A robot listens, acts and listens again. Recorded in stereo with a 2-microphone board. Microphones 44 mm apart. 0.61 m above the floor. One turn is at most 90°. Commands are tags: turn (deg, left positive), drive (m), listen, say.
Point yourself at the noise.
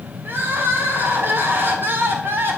<turn deg="-55"/>
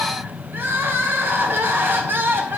<turn deg="-60"/>
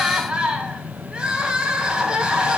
<turn deg="-20"/>
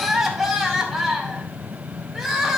<say>Found it: crying, straight ahead.</say>